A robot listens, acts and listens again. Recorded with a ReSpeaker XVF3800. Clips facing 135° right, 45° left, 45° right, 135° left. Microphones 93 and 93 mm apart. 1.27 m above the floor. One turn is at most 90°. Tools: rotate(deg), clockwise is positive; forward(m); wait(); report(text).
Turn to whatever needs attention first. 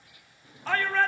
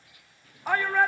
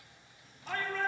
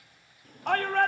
rotate(-90)
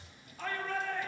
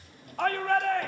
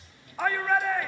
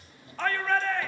rotate(-35)
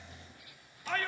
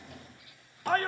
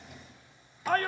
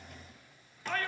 report("Facing the shout.")